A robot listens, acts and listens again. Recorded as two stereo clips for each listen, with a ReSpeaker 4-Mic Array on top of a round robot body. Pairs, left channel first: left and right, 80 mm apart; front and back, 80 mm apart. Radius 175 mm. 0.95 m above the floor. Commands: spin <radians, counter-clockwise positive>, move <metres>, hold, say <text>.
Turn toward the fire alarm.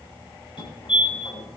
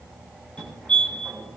spin 1.40
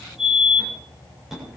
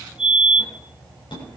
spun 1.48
say Found it: a fire alarm, straight ahead.